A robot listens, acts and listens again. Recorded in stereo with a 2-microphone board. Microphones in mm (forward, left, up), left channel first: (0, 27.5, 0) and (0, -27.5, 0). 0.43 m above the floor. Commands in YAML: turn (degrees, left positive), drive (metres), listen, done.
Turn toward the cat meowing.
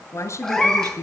turn: 30
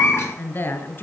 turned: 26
turn: 130
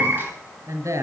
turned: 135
turn: -35
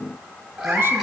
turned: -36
turn: -10
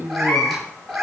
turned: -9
done: "Found it: a cat meowing, straight ahead."